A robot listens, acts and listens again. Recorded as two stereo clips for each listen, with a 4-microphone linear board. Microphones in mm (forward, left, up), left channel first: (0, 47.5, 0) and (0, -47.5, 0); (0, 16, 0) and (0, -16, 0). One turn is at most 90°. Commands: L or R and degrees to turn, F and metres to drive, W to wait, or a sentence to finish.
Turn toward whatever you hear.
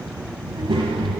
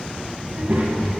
R50
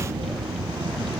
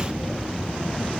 R75
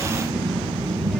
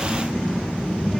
Facing the child speaking, 2 to 4 m away.